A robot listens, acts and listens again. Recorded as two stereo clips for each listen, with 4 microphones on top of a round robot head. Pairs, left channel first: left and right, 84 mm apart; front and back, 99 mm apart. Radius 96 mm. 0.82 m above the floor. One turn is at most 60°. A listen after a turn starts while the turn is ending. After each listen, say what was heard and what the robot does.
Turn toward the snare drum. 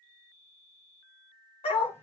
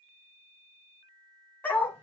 Keep listening.
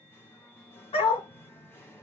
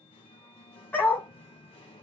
Keep listening.
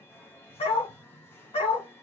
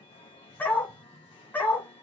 I can't make out a snare drum to turn to.